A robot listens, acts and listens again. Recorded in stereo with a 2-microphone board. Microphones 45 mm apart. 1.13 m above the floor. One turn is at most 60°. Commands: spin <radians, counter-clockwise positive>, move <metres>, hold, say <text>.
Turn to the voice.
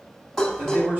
spin -0.70
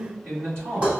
spin -1.05
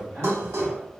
spin -0.79
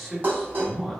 say Facing the man speaking, 1 to 2 m away.